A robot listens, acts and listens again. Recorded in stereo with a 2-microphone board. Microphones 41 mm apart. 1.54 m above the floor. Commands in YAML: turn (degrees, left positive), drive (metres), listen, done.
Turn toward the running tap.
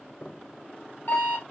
listen: true
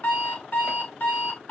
listen: true
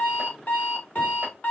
done: "I can't make out a running tap to turn to."